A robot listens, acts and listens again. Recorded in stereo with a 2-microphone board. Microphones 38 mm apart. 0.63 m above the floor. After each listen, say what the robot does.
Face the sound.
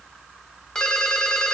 Turn 15° left.
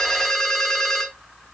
Facing the ringtone, 1 to 2 m away.